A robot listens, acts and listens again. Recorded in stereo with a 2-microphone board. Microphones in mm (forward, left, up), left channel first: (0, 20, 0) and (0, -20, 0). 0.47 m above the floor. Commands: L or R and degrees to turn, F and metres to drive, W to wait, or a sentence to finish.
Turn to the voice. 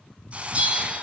W
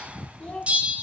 L40
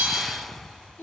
L100
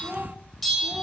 R10
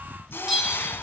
W
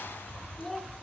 Found it: a child speaking, straight ahead.